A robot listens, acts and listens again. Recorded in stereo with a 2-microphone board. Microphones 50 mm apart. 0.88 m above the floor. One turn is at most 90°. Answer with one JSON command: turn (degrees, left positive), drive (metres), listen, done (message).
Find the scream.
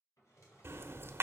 {"listen": true}
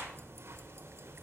{"listen": true}
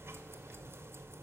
{"done": "I can't make out a scream, only a drawer and ticking."}